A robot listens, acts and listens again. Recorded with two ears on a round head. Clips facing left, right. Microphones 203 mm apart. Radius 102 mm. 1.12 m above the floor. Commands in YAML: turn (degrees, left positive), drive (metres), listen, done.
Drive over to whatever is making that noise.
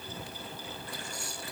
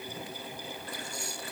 listen: true
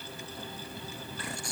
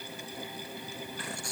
listen: true
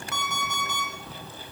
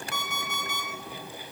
turn: 90
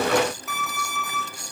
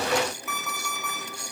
drive: 1.0
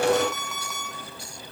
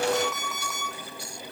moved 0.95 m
drive: 1.0
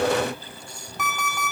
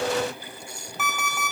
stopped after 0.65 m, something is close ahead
done: "I am next to the alarm clock."